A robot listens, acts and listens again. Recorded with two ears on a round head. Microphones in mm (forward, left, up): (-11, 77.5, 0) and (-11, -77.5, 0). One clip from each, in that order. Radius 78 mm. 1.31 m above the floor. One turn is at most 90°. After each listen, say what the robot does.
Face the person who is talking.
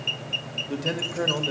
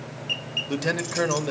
Turn 65° right.
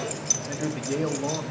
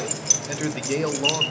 Turn 55° right.
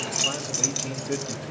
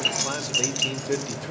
Turn 30° right.
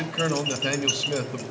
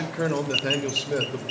Turn 15° left.
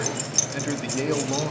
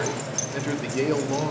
Found it: a man speaking, straight ahead, 2 to 4 m away.